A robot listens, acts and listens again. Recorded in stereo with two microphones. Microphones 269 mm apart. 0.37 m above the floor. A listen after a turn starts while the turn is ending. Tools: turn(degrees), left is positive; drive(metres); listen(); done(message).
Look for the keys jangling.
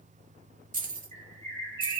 turn(degrees=-30)
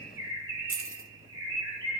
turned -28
turn(degrees=-115)
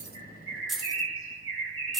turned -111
done("Found it: keys jangling, straight ahead, under 1 m away.")